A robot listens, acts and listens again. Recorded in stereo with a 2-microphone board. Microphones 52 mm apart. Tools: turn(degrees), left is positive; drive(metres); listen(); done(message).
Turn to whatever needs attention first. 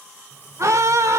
turn(degrees=-70)
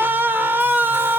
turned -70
turn(degrees=-40)
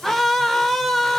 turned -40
done("Facing the scream, under 1 m away.")